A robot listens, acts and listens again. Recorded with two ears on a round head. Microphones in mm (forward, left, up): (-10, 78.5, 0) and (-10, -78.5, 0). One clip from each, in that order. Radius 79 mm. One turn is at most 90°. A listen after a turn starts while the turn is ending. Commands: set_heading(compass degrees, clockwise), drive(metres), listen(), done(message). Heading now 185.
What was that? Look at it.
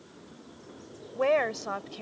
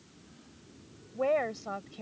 set_heading(140)
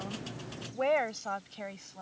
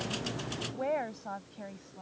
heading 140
set_heading(50)
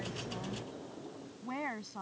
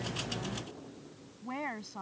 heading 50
done("Found it: a woman speaking, straight ahead.")